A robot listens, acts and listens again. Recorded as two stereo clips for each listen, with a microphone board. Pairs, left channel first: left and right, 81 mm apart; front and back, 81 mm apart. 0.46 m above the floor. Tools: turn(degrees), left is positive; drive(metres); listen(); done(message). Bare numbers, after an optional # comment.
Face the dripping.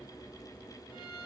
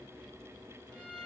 listen()
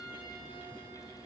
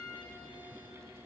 listen()
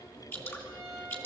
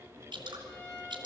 # The dripping: 155° left.
turn(155)
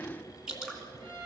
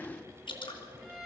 # The dripping is now 10° right.
turn(-10)
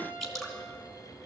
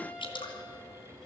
done("Found it: dripping, straight ahead.")